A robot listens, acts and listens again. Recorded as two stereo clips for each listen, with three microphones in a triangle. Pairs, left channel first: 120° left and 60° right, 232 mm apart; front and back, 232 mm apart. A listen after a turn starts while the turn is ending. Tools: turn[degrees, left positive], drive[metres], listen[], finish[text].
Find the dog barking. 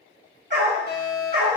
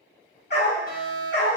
Thought: The dog barking: 25° right.
Action: turn[-25]
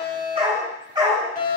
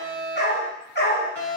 Thought: The dog barking is now 10° left.
Action: turn[10]
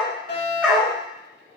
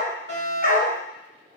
Thought: The dog barking is now 30° left.
Action: turn[30]
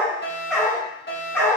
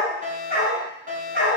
Thought: The dog barking is now 45° left.
Action: turn[45]
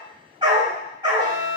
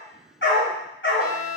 Thought: The dog barking is now 10° left.
Action: turn[10]
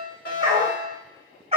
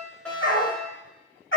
Action: finish[Facing the dog barking.]